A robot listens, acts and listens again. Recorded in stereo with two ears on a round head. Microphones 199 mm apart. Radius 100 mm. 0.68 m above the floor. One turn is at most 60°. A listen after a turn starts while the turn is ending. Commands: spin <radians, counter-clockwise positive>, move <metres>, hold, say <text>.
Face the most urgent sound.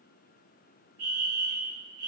spin -1.05
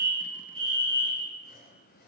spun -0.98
spin -0.44
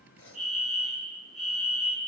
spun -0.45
say Facing the fire alarm.